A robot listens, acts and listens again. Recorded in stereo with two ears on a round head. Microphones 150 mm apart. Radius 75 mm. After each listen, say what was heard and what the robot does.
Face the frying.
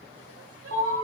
Keep listening.
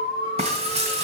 The frying: about 40° right or 140° right. Turn 40° right.
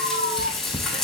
Found it: frying, straight ahead.